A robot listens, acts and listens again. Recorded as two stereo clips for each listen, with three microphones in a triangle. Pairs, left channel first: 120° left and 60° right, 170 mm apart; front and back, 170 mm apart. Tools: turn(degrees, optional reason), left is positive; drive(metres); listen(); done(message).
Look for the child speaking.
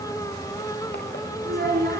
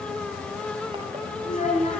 turn(degrees=-45, reason="The child speaking: 45° right.")
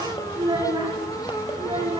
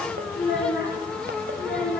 done("Facing the child speaking, 2 to 4 m away.")